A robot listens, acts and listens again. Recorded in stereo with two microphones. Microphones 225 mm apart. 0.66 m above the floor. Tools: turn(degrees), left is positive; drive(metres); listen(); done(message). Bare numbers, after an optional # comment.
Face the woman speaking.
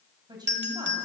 # The woman speaking: about 20° right or 160° right.
turn(-20)
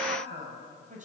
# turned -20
# The woman speaking: about 35° right or 145° right.
turn(-35)
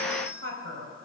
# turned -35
# So it is at 115° right.
turn(-115)
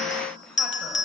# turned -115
done("Facing the woman speaking.")